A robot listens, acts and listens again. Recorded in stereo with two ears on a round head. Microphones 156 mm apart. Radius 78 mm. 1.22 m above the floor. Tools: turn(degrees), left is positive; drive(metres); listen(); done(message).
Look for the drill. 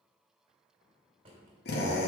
turn(degrees=65)
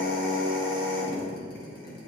turn(degrees=55)
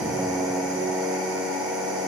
done("Found it: a drill, straight ahead.")